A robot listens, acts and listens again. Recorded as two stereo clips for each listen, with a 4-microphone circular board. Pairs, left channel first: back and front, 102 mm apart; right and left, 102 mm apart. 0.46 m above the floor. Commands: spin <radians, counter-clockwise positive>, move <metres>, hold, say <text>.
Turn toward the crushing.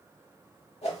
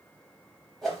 hold
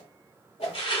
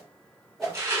spin 2.62
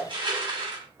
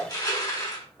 spin -0.70
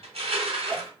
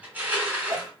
spin 0.26
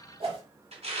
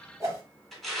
say Facing the crushing.